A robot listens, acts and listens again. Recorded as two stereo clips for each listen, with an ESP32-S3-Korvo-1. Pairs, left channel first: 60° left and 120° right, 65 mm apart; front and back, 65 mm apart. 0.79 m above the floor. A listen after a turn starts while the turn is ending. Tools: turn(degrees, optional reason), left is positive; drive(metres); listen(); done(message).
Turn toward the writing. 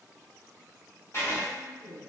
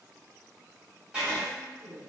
turn(degrees=110, reason="The writing: 110° left.")
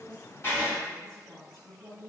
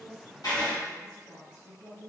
done("Facing the writing.")